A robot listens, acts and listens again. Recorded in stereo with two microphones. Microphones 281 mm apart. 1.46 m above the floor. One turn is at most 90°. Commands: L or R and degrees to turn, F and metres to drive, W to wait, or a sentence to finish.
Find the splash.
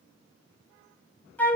W
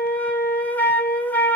W
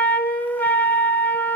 I can't make out a splash to turn to.